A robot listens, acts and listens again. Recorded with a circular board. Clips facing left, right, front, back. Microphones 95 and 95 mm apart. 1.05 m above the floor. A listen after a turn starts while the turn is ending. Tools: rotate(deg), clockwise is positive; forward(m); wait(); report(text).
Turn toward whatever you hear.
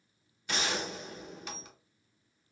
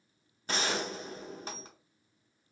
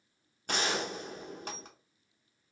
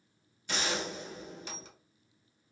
rotate(35)
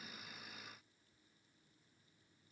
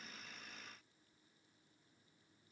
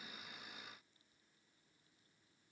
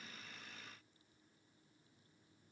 report("I heard a gunshot from this way, but can't make it out now.")